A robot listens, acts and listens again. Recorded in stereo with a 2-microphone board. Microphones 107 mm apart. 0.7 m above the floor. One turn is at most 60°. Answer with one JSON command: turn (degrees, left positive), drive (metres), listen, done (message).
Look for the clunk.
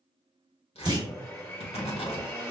{"turn": -40}
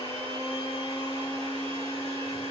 {"listen": true}
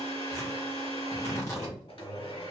{"done": "I heard a clunk, but can't make it out now. It was about straight ahead or 100° right."}